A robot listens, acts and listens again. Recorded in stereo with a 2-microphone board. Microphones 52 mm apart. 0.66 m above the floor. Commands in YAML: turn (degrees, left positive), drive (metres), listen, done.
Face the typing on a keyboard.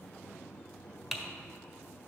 turn: 30
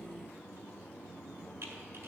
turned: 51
listen: true
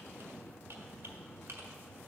listen: true
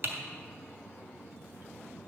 turn: -50
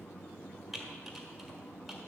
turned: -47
done: "Found it: typing on a keyboard, straight ahead."